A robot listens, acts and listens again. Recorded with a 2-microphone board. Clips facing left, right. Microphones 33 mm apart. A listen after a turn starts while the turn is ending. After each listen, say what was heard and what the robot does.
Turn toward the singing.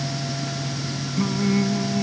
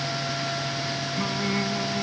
Turn 30° right.
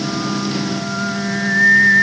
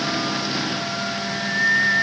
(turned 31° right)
So it is at 25° left. Turn 25° left.
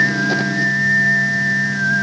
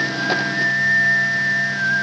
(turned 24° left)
Facing the singing.